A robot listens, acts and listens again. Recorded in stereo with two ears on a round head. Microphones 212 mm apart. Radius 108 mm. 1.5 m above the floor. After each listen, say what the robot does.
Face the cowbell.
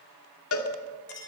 Turn 65° left.
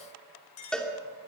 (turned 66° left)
Facing the cowbell, 2 to 4 m away.